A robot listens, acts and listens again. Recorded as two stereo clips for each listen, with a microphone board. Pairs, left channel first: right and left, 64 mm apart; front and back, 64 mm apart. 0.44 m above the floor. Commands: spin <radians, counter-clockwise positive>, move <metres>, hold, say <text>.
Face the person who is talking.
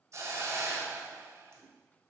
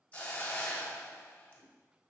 hold
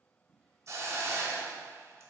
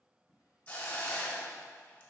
hold
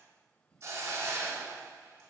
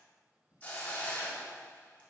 say I can't make out anyone speaking, only a drawer and a hiss.